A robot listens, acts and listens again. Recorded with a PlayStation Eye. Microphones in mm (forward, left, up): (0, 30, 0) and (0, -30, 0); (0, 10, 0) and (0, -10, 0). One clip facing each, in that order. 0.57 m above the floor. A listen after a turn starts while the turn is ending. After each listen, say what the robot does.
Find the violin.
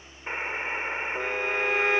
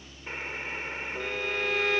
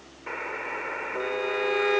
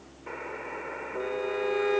Turn 30° left.
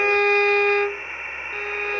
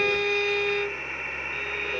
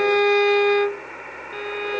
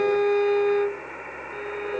Turn 120° left.
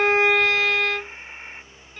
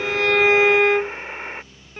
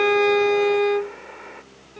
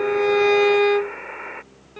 Turn 20° right.
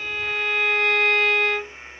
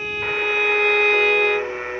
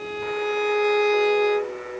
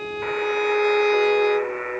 Facing the violin.